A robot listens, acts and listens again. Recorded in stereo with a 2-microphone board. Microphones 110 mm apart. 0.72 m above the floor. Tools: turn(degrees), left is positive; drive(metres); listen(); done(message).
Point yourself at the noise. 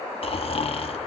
turn(degrees=55)
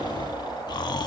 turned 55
turn(degrees=45)
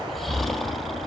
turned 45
done("Facing the snoring, under 1 m away.")